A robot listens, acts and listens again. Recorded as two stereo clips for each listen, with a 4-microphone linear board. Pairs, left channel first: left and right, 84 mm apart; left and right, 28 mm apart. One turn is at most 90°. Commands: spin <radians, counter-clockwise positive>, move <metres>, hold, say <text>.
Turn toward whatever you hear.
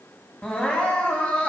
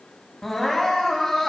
spin 0.26
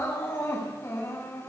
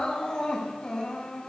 spin 1.57
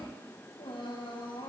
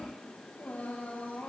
spin 1.22
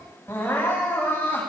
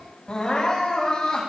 spin 0.44
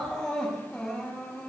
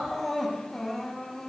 say Found it: crying, straight ahead, over 4 m away.